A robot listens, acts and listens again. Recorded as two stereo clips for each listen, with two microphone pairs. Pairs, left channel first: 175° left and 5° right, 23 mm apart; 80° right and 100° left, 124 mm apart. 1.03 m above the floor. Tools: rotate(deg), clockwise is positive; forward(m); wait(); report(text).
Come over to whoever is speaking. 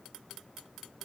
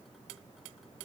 wait()
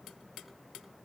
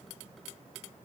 wait()
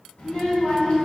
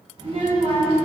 rotate(-150)
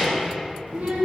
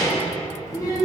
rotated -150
rotate(15)
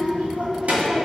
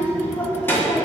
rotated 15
forward(1.0)
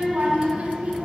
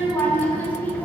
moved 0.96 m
forward(1.0)
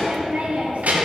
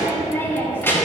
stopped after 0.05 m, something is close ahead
report("Arrived at the child speaking, straight ahead.")